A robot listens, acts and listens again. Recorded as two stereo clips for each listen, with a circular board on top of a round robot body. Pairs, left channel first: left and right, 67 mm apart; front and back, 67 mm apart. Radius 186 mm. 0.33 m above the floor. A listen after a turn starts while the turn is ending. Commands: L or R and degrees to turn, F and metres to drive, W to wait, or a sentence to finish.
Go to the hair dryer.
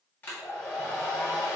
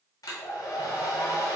L30
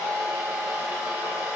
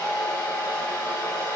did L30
R10
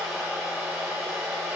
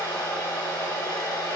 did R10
F1.0
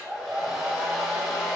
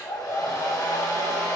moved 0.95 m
F1.0
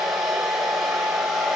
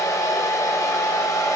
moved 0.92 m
F1.0
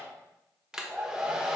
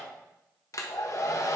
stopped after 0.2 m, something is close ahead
R15
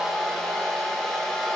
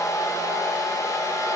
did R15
I am next to the hair dryer.